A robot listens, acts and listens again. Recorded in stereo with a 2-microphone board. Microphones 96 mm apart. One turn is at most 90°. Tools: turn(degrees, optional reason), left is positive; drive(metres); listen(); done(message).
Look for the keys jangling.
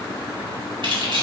turn(degrees=-60, reason="The keys jangling: about 60° right or 120° right.")
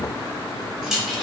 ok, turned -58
done("Facing the keys jangling, 1 to 2 m away.")